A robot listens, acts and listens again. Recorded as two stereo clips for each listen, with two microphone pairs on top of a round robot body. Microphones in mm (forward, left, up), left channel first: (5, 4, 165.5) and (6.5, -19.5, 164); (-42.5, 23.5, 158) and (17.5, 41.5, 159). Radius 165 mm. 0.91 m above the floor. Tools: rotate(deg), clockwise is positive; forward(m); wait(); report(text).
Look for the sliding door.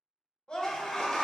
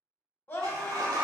rotate(-25)
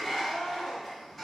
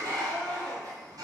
report("Found it: a sliding door, straight ahead, under 1 m away.")